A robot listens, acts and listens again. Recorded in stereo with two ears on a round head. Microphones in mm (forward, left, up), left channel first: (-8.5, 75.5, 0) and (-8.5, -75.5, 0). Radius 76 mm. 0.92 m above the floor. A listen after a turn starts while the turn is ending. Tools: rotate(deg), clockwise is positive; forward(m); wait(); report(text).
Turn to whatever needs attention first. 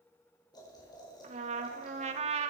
wait()
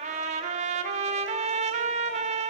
wait()
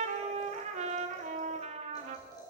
report("I can't make out anything urgent to turn to.")